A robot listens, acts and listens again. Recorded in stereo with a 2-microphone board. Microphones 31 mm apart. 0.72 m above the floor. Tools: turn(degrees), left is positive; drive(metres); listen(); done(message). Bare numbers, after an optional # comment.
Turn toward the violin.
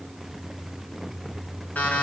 listen()
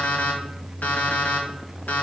listen()
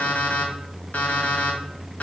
done("I can't make out a violin, only an alarm clock.")